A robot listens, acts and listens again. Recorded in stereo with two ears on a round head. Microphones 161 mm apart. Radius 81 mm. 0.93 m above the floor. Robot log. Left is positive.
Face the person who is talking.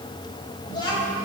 note: The child speaking: about 25° left or 155° left.
cmd yaw +25
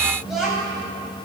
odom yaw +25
end: Facing the child speaking, over 4 m away.